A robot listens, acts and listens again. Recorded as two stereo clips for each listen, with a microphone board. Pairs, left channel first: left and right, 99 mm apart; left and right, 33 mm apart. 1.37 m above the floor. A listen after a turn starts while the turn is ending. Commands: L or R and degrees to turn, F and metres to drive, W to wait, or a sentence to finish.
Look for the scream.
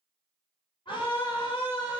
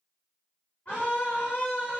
L55
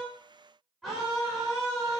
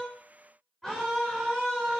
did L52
Found it: a scream, straight ahead, over 4 m away.